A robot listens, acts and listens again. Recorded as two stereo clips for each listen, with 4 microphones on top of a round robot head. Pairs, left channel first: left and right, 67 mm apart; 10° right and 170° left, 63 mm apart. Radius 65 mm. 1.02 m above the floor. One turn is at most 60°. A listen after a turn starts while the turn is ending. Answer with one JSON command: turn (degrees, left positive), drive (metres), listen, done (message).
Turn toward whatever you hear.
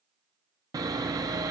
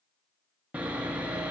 {"turn": -60}
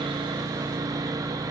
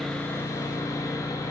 {"turn": -55}
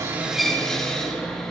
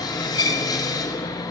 {"done": "Facing the sawing."}